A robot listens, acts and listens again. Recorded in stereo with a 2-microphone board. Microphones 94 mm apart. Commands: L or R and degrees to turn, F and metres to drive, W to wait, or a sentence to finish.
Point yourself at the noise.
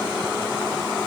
W
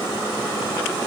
W
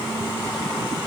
I can't make out anything to turn to.